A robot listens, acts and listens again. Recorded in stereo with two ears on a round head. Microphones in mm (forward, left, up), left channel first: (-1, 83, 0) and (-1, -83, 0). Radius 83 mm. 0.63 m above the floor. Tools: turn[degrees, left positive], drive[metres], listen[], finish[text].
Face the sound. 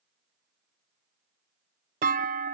Thought: The clunk: about 50° right or 130° right.
Action: turn[-50]
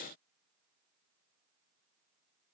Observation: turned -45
Action: listen[]
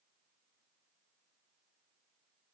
Action: finish[I heard a clunk, but can't make it out now. It was about 5° right or 85° right.]